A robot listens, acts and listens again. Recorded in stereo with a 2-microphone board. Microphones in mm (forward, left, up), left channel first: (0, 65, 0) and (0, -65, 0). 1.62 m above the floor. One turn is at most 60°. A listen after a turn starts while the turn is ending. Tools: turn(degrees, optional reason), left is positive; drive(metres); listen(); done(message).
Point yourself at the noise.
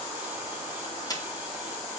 turn(degrees=30, reason="The camera shutter: about 30° left or 150° left.")
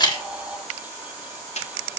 turn(degrees=60, reason="So it is at 120° left.")
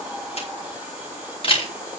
turn(degrees=45, reason="The camera shutter is now 45° left.")
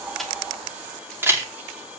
turn(degrees=-20, reason="The camera shutter is now 20° right.")
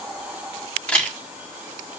turn(degrees=10, reason="The camera shutter is now 10° left.")
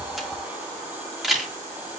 done("Found it: a camera shutter, straight ahead.")